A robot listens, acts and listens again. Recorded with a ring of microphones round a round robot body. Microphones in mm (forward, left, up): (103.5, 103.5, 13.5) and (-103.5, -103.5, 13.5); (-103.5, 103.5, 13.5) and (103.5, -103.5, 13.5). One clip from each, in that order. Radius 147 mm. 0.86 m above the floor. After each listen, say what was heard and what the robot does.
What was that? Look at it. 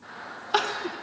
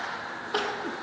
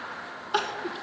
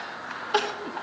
The crying: 50° left. Turn 50° left.
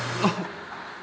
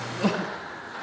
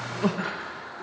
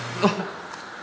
The crying is now 10° left. Turn 10° left.
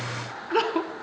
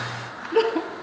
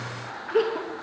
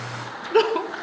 Found it: crying, straight ahead.